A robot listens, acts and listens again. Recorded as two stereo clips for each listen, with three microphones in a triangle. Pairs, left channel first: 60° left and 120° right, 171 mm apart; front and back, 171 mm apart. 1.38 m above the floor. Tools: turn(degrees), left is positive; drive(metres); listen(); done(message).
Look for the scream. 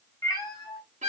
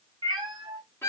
listen()
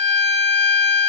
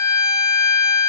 listen()
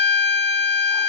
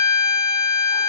done("I can't make out a scream, only a violin and a cat meowing.")